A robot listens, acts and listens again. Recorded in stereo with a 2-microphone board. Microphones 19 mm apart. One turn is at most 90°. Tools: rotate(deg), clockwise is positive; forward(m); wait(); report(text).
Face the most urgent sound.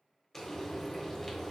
wait()
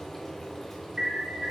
rotate(45)
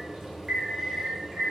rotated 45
rotate(80)
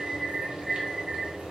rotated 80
rotate(30)
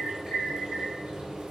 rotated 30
rotate(-25)
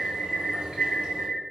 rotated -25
rotate(-10)
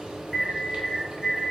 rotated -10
report("Facing the alarm.")